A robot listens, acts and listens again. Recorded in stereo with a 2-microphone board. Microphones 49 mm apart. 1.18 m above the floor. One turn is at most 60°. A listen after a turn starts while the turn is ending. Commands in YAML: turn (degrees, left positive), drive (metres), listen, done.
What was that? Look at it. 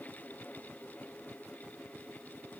listen: true
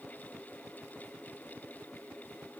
listen: true
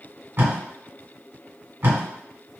turn: -50
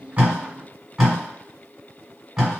turn: -10
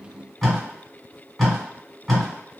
done: "Found it: tape being pulled, straight ahead."